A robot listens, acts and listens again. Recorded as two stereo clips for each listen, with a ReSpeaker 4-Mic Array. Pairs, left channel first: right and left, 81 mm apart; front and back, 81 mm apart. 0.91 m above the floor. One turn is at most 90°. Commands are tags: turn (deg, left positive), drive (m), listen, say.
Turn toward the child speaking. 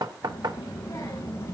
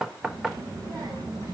<turn deg="-90"/>
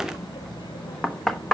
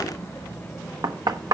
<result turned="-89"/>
<turn deg="-80"/>
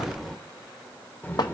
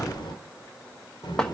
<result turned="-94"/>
<turn deg="-25"/>
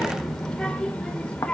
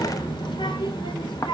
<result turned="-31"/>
<turn deg="-10"/>
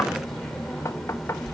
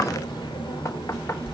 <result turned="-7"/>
<say>Found it: a child speaking, straight ahead, 1 to 2 m away.</say>